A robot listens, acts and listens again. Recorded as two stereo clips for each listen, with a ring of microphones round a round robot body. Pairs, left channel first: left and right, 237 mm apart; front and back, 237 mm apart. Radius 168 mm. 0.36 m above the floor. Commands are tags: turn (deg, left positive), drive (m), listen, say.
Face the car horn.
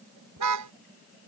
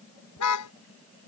<turn deg="-45"/>
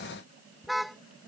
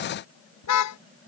<say>Facing the car horn.</say>